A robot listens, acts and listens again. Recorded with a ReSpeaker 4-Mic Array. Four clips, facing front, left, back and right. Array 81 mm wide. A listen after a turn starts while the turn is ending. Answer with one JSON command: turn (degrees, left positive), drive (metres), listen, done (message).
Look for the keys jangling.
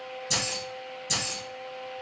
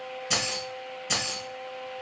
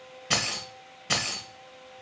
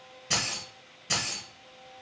{"turn": 175}
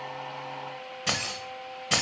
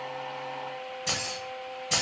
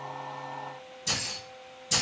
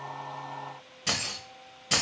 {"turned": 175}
{"turn": -15}
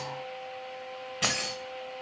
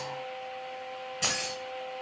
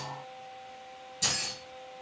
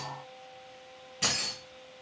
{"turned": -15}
{"done": "Facing the keys jangling."}